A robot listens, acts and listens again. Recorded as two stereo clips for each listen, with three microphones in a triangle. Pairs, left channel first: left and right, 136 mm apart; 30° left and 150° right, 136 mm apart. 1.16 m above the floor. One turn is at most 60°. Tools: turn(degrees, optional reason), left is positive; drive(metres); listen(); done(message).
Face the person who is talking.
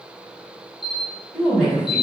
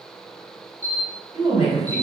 turn(degrees=60, reason="The woman speaking: 175° left.")
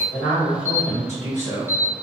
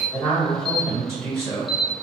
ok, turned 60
turn(degrees=60, reason="The woman speaking is now 115° left.")
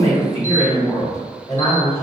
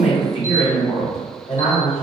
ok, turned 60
turn(degrees=60, reason="The woman speaking is now 60° left.")
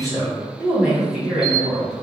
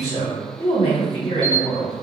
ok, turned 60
done("Facing the woman speaking.")